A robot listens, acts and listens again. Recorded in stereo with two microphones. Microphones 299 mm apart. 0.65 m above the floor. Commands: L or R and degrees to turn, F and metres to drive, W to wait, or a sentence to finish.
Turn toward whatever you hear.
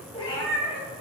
L20
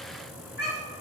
L35
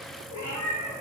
L110
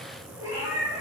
R10
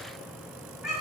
Found it: a cat meowing, straight ahead.